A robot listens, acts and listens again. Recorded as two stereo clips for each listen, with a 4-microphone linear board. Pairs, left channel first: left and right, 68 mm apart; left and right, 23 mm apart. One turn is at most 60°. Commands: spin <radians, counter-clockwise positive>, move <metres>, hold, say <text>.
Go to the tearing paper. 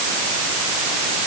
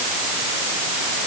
hold
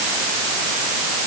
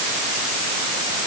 hold
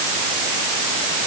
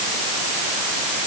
say I can't make out tearing paper to turn to.